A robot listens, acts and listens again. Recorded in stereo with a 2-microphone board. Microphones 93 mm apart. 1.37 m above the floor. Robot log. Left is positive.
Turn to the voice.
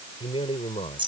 cmd yaw +90
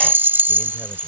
cmd idle
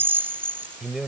end: Found it: a man speaking, straight ahead.